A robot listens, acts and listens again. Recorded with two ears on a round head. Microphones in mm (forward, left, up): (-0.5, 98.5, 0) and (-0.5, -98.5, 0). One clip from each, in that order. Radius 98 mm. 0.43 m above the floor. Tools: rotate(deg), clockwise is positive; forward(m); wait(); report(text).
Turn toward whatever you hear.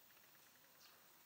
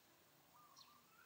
wait()
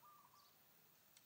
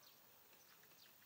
wait()
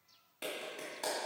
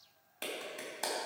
rotate(25)
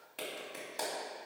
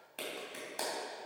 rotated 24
report("Facing the clap.")